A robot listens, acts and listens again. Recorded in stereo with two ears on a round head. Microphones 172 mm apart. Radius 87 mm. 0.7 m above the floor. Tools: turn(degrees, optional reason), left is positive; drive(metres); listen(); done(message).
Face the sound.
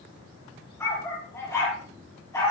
turn(degrees=20, reason="The dog barking: about 20° left or 160° left.")
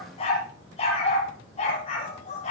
turn(degrees=140, reason="So it is at 140° left.")
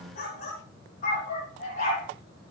turn(degrees=40, reason="The dog barking is now 40° left.")
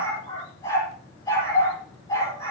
turn(degrees=20, reason="The dog barking is now 20° left.")
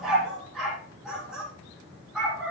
done("Found it: a dog barking, straight ahead, over 4 m away.")